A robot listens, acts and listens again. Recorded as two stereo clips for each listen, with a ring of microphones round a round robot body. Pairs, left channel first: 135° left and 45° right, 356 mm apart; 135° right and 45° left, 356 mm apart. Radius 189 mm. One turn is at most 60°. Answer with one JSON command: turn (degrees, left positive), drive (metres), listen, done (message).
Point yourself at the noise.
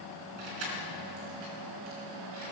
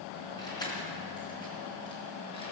{"turn": -55}
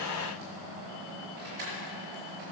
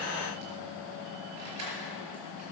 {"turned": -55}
{"done": "Facing the keys jangling, over 4 m away."}